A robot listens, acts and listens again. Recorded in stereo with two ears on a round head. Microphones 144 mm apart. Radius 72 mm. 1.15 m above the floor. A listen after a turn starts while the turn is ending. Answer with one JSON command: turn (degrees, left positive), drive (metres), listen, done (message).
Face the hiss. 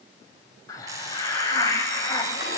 {"turn": 20}
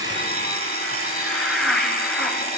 {"done": "Found it: a hiss, straight ahead, 2 to 4 m away."}